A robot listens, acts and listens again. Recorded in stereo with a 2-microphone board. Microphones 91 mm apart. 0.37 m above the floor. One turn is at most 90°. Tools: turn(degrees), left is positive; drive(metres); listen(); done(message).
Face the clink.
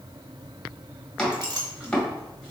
turn(degrees=-50)
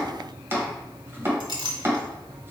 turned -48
turn(degrees=-75)
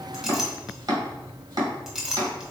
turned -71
done("Found it: a clink, straight ahead, 1 to 2 m away.")